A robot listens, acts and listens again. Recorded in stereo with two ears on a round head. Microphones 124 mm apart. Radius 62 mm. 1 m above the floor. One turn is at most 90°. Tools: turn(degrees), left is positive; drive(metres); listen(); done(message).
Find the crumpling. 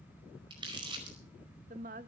turn(degrees=-35)
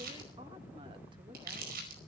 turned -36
turn(degrees=-90)
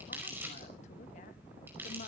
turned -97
turn(degrees=-15)
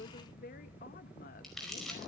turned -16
done("Found it: crumpling, straight ahead, over 4 m away.")